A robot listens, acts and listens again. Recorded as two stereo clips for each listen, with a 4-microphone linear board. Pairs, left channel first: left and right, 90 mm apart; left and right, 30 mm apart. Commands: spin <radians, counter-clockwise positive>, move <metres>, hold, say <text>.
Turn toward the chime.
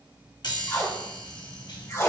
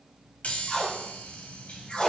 spin 1.05
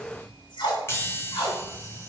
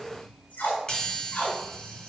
spin 0.61
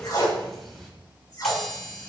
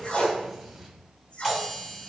say Facing the chime.